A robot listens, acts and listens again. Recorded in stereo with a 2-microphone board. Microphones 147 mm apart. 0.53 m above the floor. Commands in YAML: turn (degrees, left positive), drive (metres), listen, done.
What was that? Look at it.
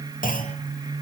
turn: 70
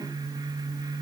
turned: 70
listen: true
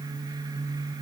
done: "I heard a clunk, but can't make it out now. It was about straight ahead or 40° left."